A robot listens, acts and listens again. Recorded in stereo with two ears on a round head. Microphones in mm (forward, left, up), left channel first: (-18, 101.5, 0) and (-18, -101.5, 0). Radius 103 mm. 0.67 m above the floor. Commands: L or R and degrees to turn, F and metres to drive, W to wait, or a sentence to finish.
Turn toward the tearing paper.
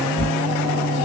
L25
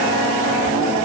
W
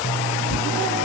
L130
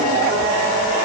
W
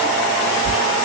L35
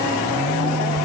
W
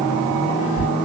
Found it: tearing paper, straight ahead.